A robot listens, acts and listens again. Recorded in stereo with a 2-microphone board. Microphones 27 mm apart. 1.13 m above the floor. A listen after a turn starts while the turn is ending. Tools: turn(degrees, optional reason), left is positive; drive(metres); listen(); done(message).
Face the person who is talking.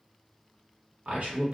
turn(degrees=-60, reason="The man speaking: about 60° right or 120° right.")
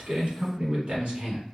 turn(degrees=-50, reason="So it is at 50° right.")
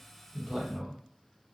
done("Found it: a man speaking, straight ahead.")